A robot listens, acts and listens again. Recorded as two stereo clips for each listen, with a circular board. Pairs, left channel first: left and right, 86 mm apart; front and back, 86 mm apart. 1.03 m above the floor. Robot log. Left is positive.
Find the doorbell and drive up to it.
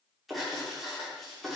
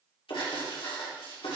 cmd idle
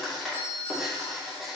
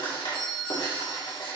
note: The doorbell: 75° left.
cmd yaw +75
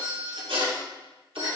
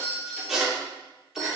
note: The doorbell is now 20° right.
cmd yaw -20
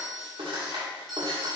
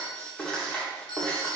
cmd fwd 1.0
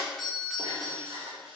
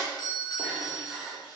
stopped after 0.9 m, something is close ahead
end: Arrived at the doorbell, straight ahead.